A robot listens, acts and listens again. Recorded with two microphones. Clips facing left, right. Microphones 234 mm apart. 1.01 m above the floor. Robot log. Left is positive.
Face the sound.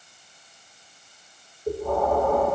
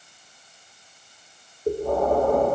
note: The breathing: about 40° right or 140° right.
cmd yaw -40
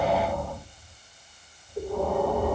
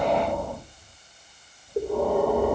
note: So it is at 105° right.
cmd yaw -105
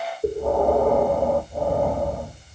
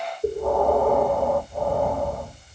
note: The breathing is now 15° left.
cmd yaw +15
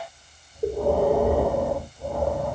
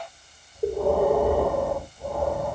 end: Facing the breathing.